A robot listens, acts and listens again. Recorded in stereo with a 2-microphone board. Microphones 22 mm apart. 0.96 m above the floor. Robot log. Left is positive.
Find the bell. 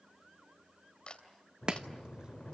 cmd yaw +90
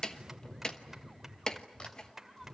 note: So it is at 10° right.
cmd yaw -10
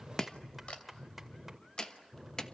end: Found it: a bell, straight ahead.